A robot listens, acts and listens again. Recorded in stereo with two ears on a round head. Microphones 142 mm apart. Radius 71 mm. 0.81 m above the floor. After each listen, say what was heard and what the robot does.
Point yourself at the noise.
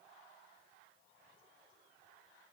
Keep listening.
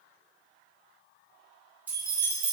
Turn 30° right.
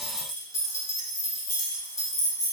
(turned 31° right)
So it is at 20° left. Turn 20° left.
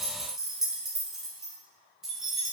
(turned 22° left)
Facing the keys jangling.